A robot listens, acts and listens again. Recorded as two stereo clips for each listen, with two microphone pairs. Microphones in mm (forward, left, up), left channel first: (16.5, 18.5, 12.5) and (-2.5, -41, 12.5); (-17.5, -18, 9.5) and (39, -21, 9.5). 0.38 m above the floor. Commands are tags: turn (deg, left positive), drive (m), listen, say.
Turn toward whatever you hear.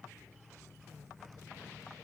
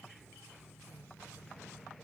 <listen/>
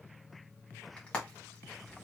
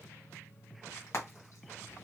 <turn deg="145"/>
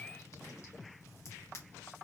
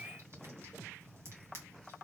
<turn deg="35"/>
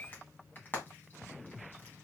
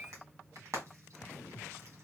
<turn deg="15"/>
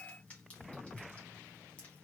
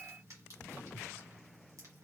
<listen/>
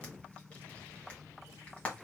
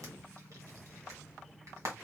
<say>Found it: frying, straight ahead, 1 to 2 m away.</say>